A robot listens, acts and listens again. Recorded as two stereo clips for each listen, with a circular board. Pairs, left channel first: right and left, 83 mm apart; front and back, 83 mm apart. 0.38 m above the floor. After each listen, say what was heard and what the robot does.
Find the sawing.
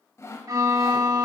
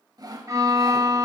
The sawing: 145° right. Turn 145° right.
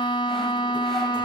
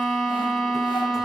Keep listening.
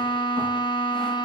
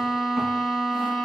Keep listening.
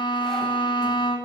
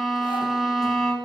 I heard sawing from this way, but can't make it out now.